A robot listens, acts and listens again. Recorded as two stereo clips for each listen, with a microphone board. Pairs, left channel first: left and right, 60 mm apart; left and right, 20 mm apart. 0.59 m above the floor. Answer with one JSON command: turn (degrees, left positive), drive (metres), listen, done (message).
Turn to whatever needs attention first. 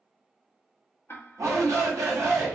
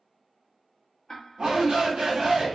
{"turn": -60}
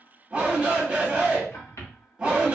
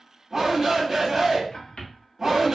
{"turn": -20}
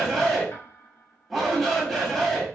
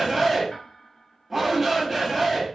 {"done": "Found it: a shout, straight ahead, 1 to 2 m away."}